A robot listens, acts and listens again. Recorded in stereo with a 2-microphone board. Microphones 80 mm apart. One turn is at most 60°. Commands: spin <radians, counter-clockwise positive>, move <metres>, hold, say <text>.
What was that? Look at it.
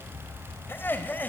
spin 0.44
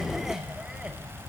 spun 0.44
hold
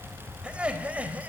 spin -0.26
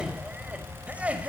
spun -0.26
spin -0.26
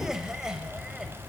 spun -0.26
say Facing the laughter.